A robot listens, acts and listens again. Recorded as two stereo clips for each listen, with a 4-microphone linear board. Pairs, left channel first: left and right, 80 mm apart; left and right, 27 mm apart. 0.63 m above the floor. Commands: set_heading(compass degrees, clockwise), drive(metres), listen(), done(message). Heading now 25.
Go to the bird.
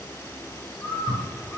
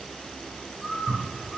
set_heading(0)
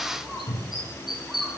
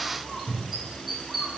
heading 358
drive(1.0)
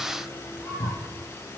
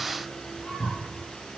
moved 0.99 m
listen()
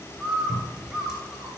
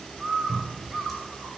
drive(1.0)
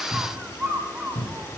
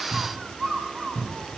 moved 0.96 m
set_heading(13)
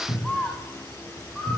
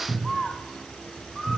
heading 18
drive(1.0)
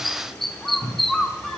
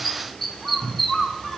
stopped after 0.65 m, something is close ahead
done("I am next to the bird.")